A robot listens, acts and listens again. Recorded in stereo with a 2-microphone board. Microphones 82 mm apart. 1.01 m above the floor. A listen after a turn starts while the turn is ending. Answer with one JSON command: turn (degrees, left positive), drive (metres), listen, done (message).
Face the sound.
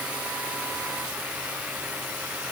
{"listen": true}
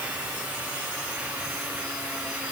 {"listen": true}
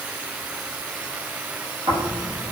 {"turn": -90}
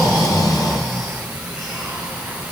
{"done": "Found it: snoring, straight ahead."}